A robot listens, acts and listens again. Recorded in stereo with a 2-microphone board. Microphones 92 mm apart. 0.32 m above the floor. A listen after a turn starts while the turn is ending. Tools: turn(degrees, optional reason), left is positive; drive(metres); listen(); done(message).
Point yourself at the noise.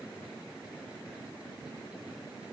listen()
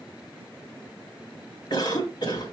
turn(degrees=55, reason="The cough: about 55° left or 125° left.")
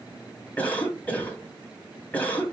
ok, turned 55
turn(degrees=20, reason="So it is at 20° left.")
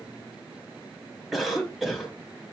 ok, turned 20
done("Facing the cough.")